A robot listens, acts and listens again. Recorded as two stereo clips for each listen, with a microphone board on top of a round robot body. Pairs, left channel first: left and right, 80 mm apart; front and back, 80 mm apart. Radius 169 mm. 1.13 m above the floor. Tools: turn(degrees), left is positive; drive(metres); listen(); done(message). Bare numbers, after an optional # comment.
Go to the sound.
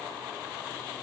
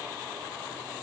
listen()
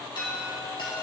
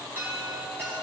# The chime: 115° left.
turn(115)
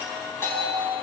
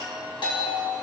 # The chime is now 30° left.
turn(30)
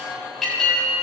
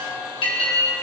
drive(1.0)
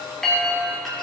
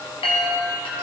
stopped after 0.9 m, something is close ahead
done("Arrived at the chime, straight ahead.")